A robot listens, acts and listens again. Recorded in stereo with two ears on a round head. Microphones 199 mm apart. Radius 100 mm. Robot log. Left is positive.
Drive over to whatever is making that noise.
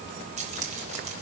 note: The keys jangling: about 35° right or 145° right.
cmd yaw -35
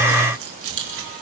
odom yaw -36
note: So it is at 110° right.
cmd yaw -110
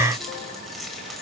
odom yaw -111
cmd fwd 1.0
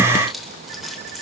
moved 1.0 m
cmd fwd 1.0
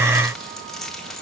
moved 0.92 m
cmd fwd 1.0
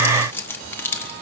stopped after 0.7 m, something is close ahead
note: The keys jangling is now 10° left.
cmd yaw +10
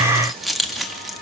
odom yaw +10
end: Arrived at the keys jangling, straight ahead.